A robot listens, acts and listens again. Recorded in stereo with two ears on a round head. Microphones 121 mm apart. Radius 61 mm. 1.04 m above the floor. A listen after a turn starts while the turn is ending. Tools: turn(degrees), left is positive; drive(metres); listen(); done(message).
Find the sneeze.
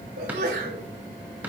turn(degrees=-90)
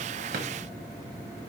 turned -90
done("I heard a sneeze from this way, but can't make it out now.")